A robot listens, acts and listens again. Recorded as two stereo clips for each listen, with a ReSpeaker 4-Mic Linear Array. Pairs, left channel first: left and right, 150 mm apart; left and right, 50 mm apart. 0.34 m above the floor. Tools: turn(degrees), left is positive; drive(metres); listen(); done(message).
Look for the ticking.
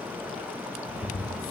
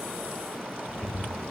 turn(degrees=55)
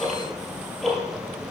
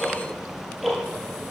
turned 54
done("Found it: ticking, straight ahead.")